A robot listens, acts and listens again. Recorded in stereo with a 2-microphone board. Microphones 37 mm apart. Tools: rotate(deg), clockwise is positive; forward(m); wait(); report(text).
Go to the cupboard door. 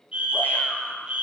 wait()
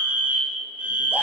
wait()
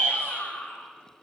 report("I can't make out a cupboard door to turn to.")